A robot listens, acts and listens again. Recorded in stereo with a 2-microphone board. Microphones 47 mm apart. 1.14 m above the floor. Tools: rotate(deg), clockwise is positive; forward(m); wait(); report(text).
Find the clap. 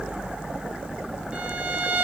wait()
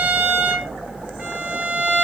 wait()
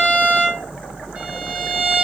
report("I can't make out a clap to turn to.")